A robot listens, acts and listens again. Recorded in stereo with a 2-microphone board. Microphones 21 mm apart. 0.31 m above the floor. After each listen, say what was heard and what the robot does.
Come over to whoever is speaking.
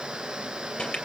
Keep listening.
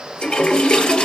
Keep listening.
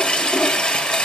I can't make out anyone speaking to turn to.